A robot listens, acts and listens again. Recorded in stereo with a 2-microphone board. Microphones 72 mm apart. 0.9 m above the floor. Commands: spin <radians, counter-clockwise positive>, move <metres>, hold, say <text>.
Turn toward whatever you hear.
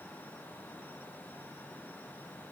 hold
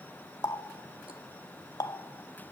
spin 0.96
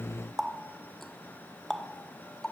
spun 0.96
say Facing the running tap, 1 to 2 m away.